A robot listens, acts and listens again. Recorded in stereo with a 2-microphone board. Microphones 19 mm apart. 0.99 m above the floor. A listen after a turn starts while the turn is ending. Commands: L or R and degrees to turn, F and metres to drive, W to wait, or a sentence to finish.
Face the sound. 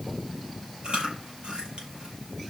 R55
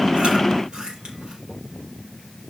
R65
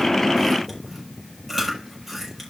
Facing the chewing.